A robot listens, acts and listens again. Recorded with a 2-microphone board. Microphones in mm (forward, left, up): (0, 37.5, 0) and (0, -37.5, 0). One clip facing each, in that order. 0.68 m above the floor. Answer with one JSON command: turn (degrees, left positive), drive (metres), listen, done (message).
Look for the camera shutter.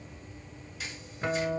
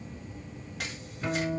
{"turn": -65}
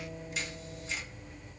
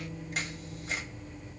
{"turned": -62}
{"turn": -55}
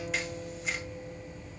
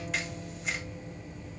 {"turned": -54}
{"listen": true}
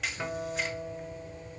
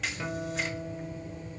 {"done": "Facing the camera shutter, 1 to 2 m away."}